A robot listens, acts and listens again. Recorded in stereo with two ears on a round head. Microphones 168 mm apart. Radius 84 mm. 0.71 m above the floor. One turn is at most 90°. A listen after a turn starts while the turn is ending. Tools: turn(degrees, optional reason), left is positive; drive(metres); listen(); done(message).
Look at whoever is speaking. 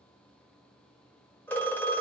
listen()
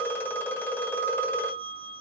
listen()
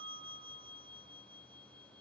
done("I can't make out anyone speaking, only a phone ringing.")